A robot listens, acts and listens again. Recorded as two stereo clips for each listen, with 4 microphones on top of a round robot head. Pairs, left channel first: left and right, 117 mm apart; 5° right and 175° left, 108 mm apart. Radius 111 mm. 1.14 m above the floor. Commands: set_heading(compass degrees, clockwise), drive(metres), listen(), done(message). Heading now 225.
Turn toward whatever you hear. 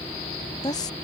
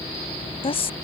set_heading(195)
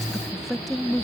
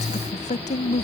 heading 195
done("Facing the woman speaking.")